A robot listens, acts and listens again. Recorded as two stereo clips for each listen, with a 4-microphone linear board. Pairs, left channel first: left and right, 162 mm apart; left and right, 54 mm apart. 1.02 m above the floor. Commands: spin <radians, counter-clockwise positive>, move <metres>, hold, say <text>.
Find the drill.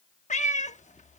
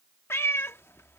hold
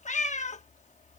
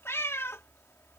hold
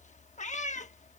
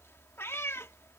say I can't make out a drill, only a cat meowing.